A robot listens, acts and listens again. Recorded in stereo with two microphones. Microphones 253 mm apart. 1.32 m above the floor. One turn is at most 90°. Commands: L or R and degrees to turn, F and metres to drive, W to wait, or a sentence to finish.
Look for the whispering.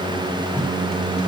W
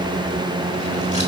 W
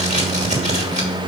I can't make out whispering, only tape being pulled.